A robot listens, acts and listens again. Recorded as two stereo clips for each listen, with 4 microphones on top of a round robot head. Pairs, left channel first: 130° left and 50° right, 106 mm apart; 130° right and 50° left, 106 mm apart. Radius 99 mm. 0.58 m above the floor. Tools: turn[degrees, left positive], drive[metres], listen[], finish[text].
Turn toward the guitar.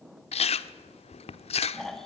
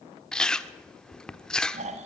Action: listen[]
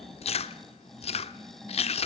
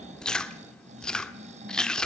Action: listen[]
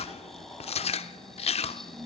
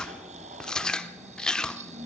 Action: finish[I can't make out a guitar, only chewing and snoring.]